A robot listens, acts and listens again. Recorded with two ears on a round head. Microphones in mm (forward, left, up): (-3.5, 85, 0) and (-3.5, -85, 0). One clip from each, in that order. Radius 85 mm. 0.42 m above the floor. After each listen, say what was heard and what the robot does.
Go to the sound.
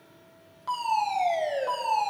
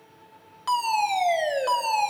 The fire alarm: about 55° right or 125° right. Turn 55° right.
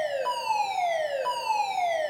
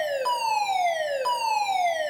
So it is at 25° right. Turn 25° right.
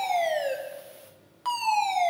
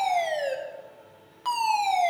Drive 1.0 m forward.
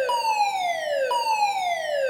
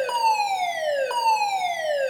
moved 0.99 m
Drive 1.0 m forward.
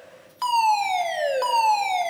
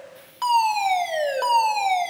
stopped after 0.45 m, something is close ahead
I am next to the fire alarm.